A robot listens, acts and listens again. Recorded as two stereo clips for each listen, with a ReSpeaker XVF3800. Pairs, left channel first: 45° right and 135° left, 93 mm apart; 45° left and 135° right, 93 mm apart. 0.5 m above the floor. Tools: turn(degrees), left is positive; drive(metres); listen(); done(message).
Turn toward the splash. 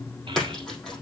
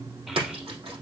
turn(degrees=-130)
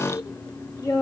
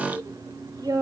done("I heard a splash from this way, but can't make it out now.")